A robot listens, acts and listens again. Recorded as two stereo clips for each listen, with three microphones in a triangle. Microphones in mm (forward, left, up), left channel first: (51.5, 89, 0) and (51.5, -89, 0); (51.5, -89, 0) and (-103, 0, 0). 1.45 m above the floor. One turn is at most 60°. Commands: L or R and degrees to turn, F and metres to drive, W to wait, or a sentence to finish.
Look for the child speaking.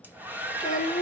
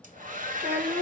L60
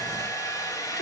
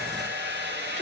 L60
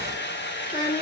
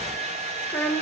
L45
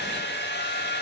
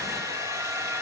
W
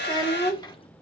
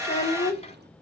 L20
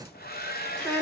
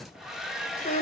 L10
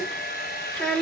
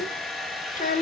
Facing the child speaking.